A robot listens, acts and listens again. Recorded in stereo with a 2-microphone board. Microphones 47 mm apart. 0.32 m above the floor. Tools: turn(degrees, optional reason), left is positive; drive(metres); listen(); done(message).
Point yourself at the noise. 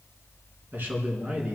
turn(degrees=-35, reason="The man speaking: about 35° right or 145° right.")
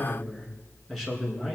done("Found it: a man speaking, straight ahead.")